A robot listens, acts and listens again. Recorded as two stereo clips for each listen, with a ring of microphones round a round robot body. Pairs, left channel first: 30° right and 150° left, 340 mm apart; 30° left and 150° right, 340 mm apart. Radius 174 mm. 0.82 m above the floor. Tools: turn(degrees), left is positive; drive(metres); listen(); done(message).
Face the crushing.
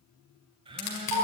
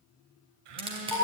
turn(degrees=-75)
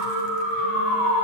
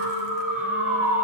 listen()
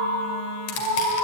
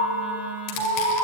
listen()
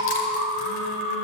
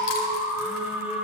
done("I heard crushing from this way, but can't make it out now.")